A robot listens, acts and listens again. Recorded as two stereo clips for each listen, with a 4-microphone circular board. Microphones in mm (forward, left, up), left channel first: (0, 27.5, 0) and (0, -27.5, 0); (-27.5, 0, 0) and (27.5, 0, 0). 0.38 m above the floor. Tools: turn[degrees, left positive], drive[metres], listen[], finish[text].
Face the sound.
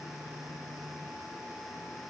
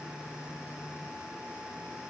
Action: listen[]
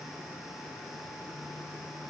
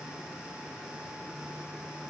Action: listen[]
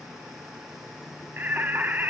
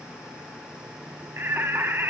Thought: The singing: 35° right.
Action: turn[-35]
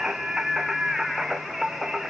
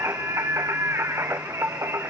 Action: finish[Found it: singing, straight ahead, 1 to 2 m away.]